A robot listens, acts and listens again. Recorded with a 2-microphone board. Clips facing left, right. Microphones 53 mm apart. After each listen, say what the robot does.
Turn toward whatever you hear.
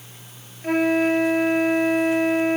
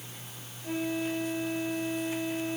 Turn 60° left.
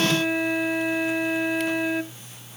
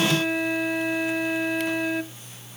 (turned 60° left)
Facing the flute.